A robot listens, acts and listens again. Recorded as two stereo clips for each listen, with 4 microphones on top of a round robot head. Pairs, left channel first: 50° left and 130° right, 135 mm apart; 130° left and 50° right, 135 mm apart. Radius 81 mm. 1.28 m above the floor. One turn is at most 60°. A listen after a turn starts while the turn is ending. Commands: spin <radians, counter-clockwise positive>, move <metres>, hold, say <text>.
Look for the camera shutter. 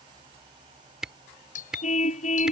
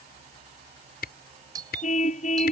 spin 1.05
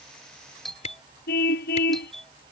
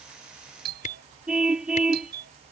spin 1.05
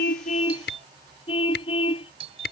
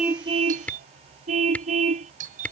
spin 0.87
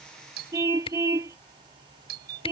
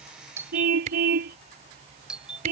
say Facing the camera shutter.